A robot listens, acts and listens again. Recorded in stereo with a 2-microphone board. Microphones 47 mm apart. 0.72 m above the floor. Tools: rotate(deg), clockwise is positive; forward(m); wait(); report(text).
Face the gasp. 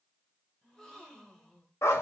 rotate(-30)
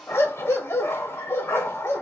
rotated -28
wait()
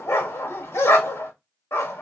report("I heard a gasp, but can't make it out now. It was about 20° right or 140° left.")